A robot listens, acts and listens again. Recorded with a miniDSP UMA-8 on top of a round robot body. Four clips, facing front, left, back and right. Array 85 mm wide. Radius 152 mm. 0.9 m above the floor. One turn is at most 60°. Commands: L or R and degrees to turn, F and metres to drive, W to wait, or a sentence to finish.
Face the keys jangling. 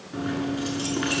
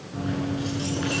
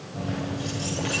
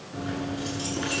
Found it: keys jangling, straight ahead.